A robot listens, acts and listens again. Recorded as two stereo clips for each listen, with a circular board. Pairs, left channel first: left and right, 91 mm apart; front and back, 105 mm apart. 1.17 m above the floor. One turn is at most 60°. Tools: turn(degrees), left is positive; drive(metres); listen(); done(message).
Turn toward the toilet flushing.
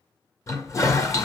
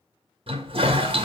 turn(degrees=60)
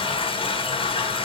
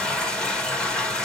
turn(degrees=60)
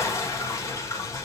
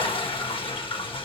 turn(degrees=35)
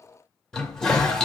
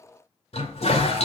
done("Facing the toilet flushing, 1 to 2 m away.")